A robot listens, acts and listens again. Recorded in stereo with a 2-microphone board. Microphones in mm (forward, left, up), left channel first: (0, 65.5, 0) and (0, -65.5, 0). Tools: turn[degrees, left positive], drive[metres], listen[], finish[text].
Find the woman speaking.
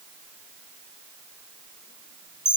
Action: listen[]
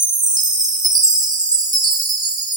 Action: listen[]
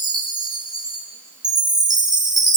Action: finish[I can't make out a woman speaking, only a chime.]